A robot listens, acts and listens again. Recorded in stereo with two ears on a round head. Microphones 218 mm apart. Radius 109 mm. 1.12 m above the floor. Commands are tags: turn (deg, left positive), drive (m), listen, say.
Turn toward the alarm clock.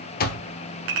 <turn deg="40"/>
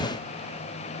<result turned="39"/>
<listen/>
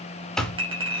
<say>Found it: an alarm clock, straight ahead.</say>